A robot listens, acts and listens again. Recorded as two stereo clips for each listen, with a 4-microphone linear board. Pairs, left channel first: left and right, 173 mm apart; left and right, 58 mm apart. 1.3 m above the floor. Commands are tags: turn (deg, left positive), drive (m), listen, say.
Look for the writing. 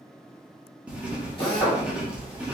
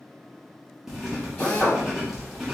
<turn deg="-30"/>
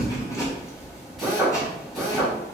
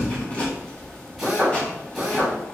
<turn deg="20"/>
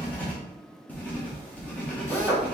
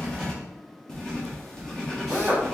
<turn deg="10"/>
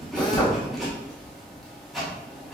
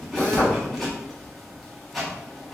<say>Found it: writing, straight ahead.</say>